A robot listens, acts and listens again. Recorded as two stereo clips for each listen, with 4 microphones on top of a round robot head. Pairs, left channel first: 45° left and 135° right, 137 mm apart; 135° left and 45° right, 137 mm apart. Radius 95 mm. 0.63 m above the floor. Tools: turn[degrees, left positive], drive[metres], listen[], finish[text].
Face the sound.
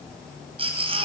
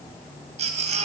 Thought: The baby crying: 85° right.
Action: turn[-85]
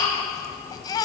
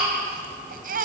Thought: The baby crying is now 20° right.
Action: turn[-20]
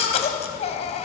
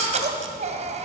Action: finish[Found it: a baby crying, straight ahead, 2 to 4 m away.]